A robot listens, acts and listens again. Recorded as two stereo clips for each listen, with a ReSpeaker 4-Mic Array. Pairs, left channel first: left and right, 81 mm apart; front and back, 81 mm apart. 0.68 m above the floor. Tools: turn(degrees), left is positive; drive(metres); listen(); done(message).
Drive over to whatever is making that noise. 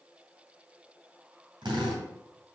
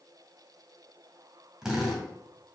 turn(degrees=-100)
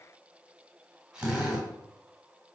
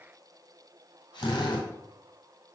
turn(degrees=-10)
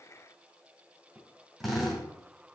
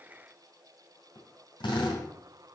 drive(metres=1.0)
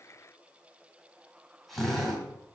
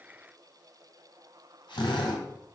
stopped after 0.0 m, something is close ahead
done("Blocked. The drill is further on, straight ahead.")